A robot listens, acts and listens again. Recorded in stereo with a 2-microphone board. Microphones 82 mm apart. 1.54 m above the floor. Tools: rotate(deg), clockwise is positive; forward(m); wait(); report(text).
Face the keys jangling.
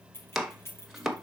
rotate(-30)
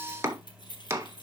rotate(-110)
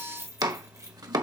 rotate(40)
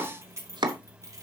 rotate(40)
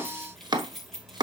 report("Facing the keys jangling, 2 to 4 m away.")